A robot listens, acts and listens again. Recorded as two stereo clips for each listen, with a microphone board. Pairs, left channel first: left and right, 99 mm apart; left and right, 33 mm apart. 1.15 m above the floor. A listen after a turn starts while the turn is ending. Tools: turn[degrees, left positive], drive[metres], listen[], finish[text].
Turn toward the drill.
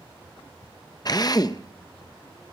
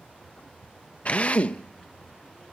Thought: The drill: about 40° left or 140° left.
Action: turn[40]
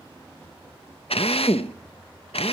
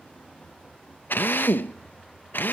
Thought: So it is at 100° left.
Action: turn[100]
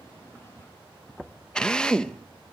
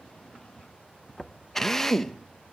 Thought: The drill is now 10° left.
Action: turn[10]
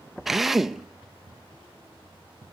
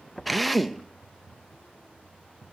Action: finish[Facing the drill, under 1 m away.]